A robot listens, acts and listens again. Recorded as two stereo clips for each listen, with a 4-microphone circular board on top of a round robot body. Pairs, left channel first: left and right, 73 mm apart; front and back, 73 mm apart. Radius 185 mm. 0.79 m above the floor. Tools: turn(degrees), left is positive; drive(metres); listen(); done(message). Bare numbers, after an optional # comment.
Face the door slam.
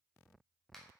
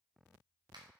listen()
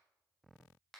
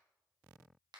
listen()
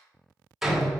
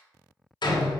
done("Found it: a door slam, straight ahead.")